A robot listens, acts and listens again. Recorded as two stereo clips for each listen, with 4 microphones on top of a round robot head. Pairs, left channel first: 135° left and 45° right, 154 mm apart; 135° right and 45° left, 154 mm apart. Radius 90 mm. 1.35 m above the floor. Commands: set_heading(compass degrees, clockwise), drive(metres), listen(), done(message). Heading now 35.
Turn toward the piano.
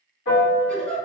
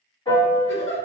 set_heading(235)
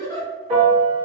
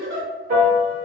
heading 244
set_heading(234)
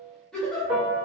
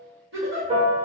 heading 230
done("Found it: a piano, straight ahead, 1 to 2 m away.")